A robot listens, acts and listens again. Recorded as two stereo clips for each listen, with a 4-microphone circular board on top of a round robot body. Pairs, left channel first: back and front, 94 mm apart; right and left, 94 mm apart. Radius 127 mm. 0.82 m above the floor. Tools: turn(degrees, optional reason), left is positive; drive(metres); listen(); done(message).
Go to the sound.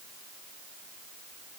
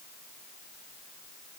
listen()
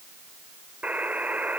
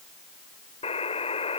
turn(degrees=-75, reason="The buzzer: 75° right.")
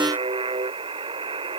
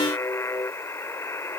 turn(degrees=-25, reason="The buzzer is now 25° right.")
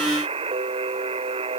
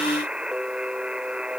turn(degrees=10, reason="The buzzer is now 10° left.")
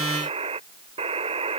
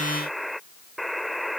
drive(metres=1.0)
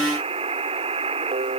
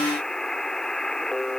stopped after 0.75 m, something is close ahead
done("Blocked. The buzzer is further on, straight ahead.")